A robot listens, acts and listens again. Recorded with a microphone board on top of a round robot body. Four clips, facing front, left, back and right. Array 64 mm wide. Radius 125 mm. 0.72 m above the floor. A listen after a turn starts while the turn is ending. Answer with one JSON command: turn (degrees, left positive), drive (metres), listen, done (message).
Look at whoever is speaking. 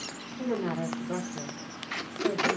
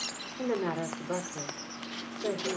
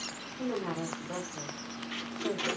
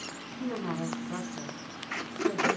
{"turn": 75}
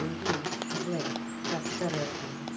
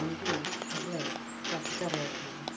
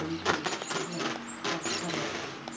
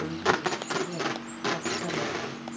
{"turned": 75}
{"listen": true}
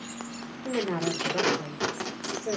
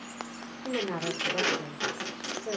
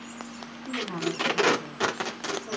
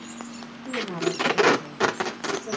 {"turn": 25}
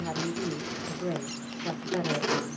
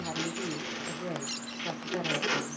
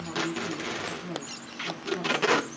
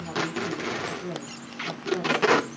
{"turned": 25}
{"turn": 20}
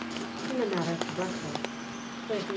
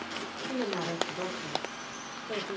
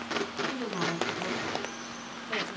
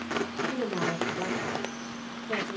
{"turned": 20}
{"done": "Facing the woman speaking."}